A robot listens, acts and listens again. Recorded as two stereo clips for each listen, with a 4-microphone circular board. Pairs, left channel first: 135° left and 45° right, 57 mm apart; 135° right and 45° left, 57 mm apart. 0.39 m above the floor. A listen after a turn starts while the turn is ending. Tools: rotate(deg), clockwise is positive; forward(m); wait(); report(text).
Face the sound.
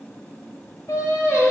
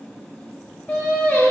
rotate(-160)
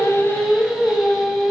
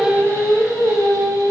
rotate(-40)
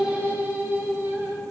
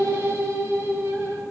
report("Facing the singing, 1 to 2 m away.")